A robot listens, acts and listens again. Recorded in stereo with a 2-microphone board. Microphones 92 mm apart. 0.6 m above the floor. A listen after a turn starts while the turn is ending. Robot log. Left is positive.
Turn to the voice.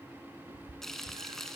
cmd idle
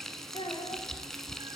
cmd yaw +90
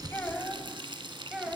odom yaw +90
note: So it is at 10° right.
cmd yaw -10
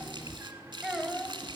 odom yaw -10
end: Found it: a child speaking, straight ahead, 1 to 2 m away.